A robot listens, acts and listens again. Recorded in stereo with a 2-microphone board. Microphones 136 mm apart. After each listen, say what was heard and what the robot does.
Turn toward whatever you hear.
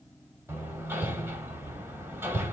The hammering: about 15° right or 165° right. Turn 15° right.
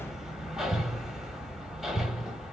Facing the hammering.